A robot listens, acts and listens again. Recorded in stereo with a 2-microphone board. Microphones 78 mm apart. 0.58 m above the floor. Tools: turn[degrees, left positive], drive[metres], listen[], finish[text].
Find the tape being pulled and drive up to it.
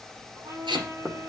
Action: turn[-90]
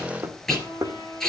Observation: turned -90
Action: drive[1.0]
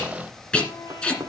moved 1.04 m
Thought: The tape being pulled is now 15° left.
Action: turn[15]
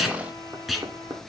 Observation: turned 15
Action: drive[1.0]
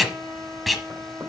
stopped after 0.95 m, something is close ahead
Action: finish[I am next to the tape being pulled.]